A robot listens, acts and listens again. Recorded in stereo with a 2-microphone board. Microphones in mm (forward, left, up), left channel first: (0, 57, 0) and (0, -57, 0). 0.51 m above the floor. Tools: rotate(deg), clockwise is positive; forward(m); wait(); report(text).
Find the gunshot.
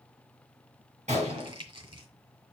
rotate(90)
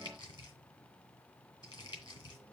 report("I heard a gunshot from this way, but can't make it out now.")